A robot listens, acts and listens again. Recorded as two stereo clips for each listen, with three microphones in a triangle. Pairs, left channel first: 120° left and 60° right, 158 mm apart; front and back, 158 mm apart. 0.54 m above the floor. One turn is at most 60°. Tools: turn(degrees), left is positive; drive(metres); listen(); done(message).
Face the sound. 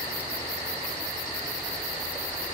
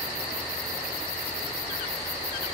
listen()
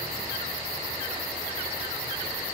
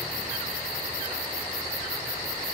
listen()
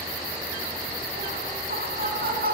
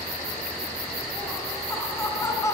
turn(degrees=-60)
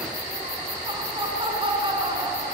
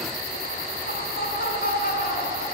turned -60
done("Found it: laughter, straight ahead.")